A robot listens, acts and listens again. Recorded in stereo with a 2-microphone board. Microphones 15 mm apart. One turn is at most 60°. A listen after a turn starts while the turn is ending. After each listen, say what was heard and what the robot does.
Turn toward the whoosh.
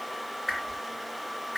The whoosh: about 15° right or 165° right. Turn 15° right.
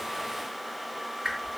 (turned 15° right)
So it is at 150° right. Turn 60° right.
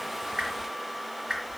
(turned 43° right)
The whoosh is now 105° right. Turn 60° right.
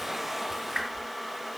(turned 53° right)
The whoosh is now 50° right. Turn 50° right.
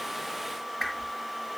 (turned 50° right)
Facing the whoosh.